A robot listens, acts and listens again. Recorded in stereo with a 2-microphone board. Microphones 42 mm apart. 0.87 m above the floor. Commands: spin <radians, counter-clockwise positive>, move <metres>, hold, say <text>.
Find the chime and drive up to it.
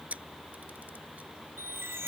spin -1.31
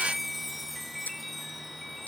move 1.0
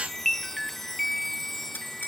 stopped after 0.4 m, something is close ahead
say Something is in my way. I am facing the chime but have not reached it.